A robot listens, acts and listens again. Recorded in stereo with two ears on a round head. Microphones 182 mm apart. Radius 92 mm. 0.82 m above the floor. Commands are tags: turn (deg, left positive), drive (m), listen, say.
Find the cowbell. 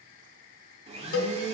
<turn deg="90"/>
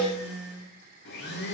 <say>Facing the cowbell.</say>